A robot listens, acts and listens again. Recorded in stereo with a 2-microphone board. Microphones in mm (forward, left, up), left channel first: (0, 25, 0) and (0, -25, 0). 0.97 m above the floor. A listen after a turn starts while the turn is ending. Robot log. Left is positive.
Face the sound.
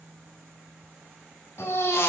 note: The baby crying: about 70° left or 110° left.
cmd yaw +70
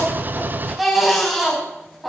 end: Facing the baby crying, over 4 m away.